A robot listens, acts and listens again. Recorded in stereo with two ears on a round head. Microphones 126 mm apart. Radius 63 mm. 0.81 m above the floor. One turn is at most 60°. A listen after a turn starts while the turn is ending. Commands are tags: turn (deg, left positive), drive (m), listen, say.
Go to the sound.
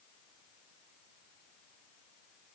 <listen/>
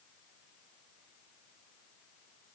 <listen/>
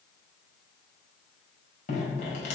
<turn deg="60"/>
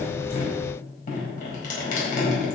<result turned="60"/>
<turn deg="60"/>
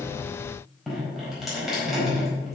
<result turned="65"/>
<drive m="1.0"/>
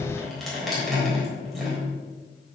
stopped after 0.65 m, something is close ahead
<say>Something is in my way. I am facing the dripping but have not reached it.</say>